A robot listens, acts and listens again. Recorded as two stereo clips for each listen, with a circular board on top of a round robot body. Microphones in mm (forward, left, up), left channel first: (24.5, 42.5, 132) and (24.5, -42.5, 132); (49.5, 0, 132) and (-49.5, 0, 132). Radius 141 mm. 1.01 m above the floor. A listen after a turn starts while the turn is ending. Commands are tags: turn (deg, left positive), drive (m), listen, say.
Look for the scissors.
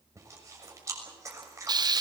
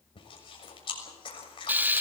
<listen/>
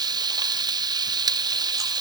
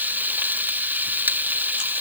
<listen/>
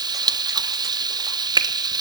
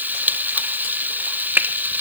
<say>I can't make out scissors, only frying and chewing.</say>